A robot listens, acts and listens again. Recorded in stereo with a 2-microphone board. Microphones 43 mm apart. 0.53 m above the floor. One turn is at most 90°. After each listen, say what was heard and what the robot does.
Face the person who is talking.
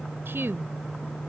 The woman speaking: about 65° right or 115° right. Turn 65° right.
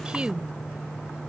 So it is at 30° right. Turn 30° right.
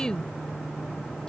The woman speaking is now 20° left. Turn 20° left.
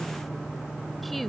Found it: a woman speaking, straight ahead.